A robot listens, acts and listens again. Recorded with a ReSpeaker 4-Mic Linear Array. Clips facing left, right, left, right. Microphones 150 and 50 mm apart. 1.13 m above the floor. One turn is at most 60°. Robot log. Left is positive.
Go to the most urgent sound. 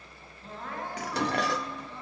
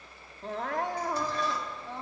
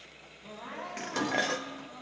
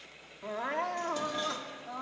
cmd yaw -60
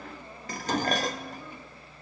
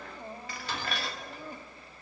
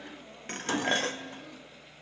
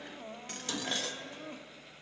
note: So it is at 40° right.
cmd yaw -40
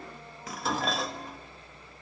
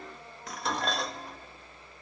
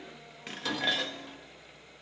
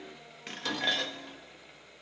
cmd idle
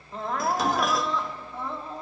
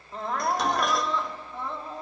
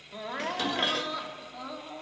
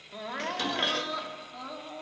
cmd fwd 1.0
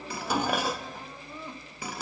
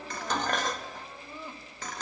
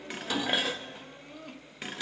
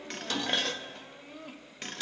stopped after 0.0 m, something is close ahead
end: Something is in my way. I am facing the crying but have not reached it.